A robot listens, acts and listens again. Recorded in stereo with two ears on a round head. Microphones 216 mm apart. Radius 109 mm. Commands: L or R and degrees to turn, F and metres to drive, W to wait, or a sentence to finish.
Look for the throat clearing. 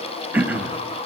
R30
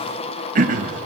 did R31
R140
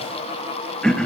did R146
Found it: throat clearing, straight ahead, 1 to 2 m away.